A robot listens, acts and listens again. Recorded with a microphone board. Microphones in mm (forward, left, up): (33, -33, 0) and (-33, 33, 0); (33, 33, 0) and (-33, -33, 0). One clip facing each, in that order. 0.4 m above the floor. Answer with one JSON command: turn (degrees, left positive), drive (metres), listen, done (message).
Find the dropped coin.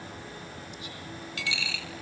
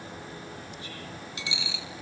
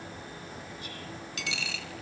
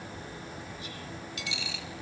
{"turn": 65}
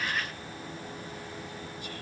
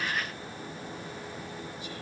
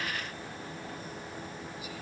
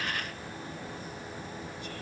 {"done": "I heard a dropped coin from this way, but can't make it out now."}